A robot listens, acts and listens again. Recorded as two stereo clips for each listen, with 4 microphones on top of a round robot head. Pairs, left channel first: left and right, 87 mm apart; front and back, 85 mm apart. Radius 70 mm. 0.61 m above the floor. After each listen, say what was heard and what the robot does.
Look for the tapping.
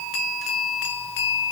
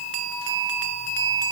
Keep listening.
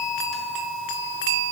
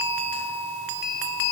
Keep listening.
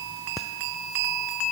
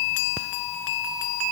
I can't make out tapping.